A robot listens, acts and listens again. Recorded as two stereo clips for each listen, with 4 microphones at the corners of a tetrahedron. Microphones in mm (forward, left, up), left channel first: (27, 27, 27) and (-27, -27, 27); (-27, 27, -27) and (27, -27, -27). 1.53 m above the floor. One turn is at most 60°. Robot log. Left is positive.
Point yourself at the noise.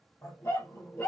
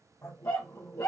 note: The dog barking: 90° left.
cmd yaw +60
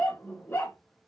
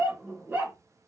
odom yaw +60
end: Found it: a dog barking, straight ahead.